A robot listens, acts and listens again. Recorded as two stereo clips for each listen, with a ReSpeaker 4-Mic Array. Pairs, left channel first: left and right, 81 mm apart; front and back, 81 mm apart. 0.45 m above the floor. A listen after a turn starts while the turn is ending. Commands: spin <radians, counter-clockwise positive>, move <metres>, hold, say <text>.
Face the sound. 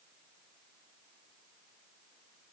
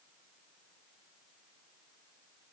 hold
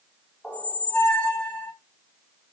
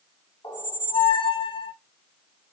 spin 0.17
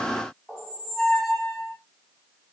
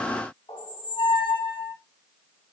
say Found it: a squeak, straight ahead.